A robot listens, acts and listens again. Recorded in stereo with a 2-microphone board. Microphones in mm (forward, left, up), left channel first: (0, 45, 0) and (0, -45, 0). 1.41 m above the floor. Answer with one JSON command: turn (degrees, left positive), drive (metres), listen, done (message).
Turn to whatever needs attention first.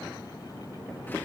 {"listen": true}
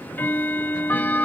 {"listen": true}
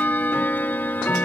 {"done": "I can't make out anything urgent, only ticking."}